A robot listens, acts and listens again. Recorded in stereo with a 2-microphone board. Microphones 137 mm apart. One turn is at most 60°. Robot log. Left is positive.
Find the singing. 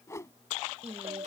note: The singing: about 55° right or 125° right.
cmd yaw -55
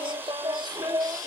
note: So it is at 30° right.
cmd yaw -30
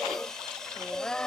note: The singing is now 10° left.
cmd yaw +10
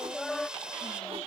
end: Facing the singing.